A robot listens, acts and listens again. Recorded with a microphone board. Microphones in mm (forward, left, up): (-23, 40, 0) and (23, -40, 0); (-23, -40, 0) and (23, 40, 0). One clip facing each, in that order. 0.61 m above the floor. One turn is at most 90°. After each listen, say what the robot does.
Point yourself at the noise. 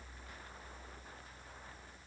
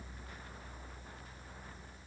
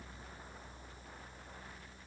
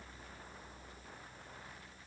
Keep listening.
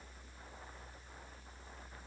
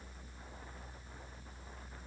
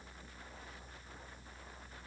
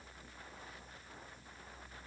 Keep listening.
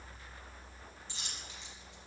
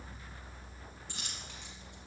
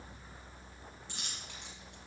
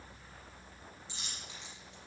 Turn 90° right.
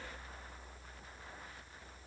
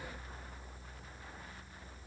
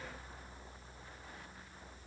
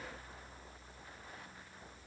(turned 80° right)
Turn 10° right.
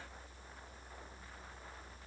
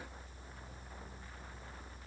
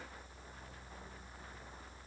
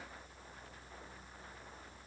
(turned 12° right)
Facing where the dropped coin came from. I can't hear it now.